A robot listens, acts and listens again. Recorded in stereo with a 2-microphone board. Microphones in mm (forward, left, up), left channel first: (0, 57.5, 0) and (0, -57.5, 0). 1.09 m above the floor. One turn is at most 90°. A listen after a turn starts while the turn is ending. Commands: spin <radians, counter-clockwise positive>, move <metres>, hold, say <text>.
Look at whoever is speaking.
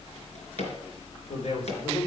spin 1.57
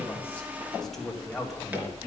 say Found it: a man speaking, straight ahead, 2 to 4 m away.